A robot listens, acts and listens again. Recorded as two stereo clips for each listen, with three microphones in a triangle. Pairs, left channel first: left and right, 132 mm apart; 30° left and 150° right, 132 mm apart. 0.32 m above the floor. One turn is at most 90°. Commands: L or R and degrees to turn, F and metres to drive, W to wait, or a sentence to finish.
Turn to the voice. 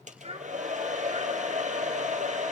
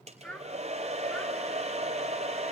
R50
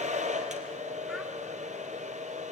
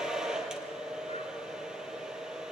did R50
W
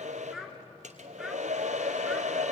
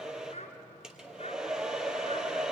Found it: a child speaking, straight ahead, 2 to 4 m away.